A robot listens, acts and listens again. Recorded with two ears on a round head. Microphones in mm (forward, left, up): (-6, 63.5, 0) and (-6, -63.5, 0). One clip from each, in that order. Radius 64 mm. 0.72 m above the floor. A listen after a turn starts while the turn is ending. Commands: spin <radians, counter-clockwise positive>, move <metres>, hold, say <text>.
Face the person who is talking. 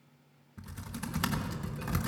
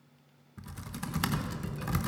hold
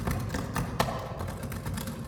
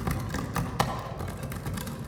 hold
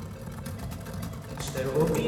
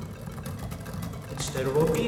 spin -1.57
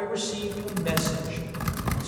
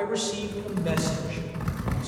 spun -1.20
spin -0.35
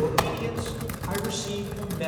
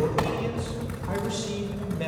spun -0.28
spin 0.35
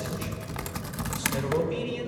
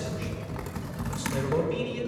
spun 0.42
say Facing the man speaking, 2 to 4 m away.